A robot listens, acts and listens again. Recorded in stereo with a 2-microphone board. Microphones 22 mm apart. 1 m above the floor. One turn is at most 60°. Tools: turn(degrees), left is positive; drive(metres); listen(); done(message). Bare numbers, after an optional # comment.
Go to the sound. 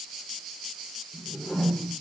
turn(60)
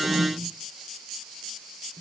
# So it is at 40° left.
turn(40)
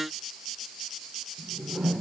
# The whoosh is now 35° right.
turn(-35)
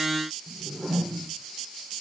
# The whoosh is now 15° left.
turn(15)
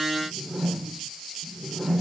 drive(1.0)
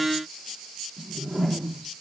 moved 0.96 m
drive(1.0)
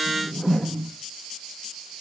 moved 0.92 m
# The whoosh is now 20° left.
turn(20)
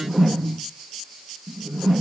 drive(1.0)
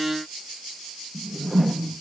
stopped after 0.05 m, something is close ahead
done("I am next to the whoosh.")